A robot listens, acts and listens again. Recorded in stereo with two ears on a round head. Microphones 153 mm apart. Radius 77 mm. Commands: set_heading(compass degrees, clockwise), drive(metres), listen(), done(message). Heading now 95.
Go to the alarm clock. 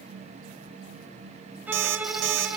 set_heading(185)
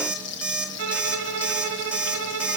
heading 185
drive(1.0)
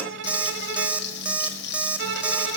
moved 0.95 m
set_heading(195)
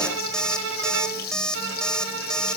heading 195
drive(1.0)
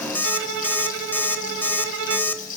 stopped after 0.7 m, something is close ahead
set_heading(185)
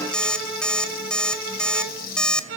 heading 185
done("Arrived at the alarm clock, straight ahead.")